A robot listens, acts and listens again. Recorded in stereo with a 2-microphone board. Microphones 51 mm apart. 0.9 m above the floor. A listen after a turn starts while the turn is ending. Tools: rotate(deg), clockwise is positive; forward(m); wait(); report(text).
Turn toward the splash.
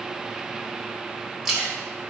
rotate(30)
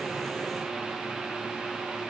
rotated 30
wait()
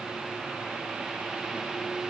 report("I heard a splash, but can't make it out now. It was about 20° left or 140° right.")